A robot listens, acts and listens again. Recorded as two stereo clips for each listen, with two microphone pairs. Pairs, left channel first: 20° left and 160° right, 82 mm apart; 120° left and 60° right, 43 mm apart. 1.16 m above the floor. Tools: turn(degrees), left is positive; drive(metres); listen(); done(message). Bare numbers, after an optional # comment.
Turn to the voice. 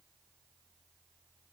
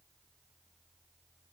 listen()
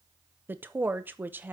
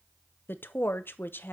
# The woman speaking: 135° left.
turn(135)
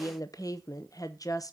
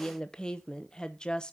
# The woman speaking is now 50° left.
turn(50)
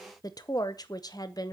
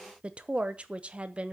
done("Facing the woman speaking.")